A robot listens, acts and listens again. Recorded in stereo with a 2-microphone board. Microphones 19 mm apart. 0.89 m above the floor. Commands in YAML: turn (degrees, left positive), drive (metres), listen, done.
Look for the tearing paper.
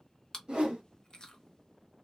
listen: true
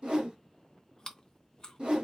listen: true
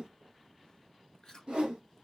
done: "I can't make out tearing paper to turn to."